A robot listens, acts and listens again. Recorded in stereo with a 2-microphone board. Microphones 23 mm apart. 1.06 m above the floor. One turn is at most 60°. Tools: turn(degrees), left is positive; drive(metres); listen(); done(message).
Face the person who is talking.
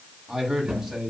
turn(degrees=-20)
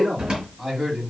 turn(degrees=-30)
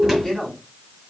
turn(degrees=20)
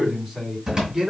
turn(degrees=-10)
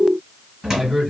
done("Found it: a man speaking, straight ahead.")